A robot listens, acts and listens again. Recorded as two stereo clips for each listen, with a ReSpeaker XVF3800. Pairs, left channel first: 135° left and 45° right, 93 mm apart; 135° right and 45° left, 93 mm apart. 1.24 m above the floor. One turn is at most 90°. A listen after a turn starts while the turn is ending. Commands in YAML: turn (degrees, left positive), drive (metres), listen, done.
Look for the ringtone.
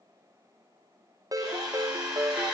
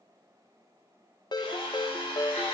turn: -90
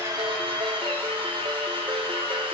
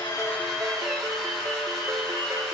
listen: true
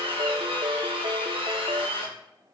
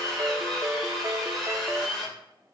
turn: -15
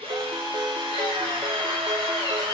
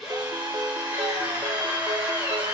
done: "Facing the ringtone, under 1 m away."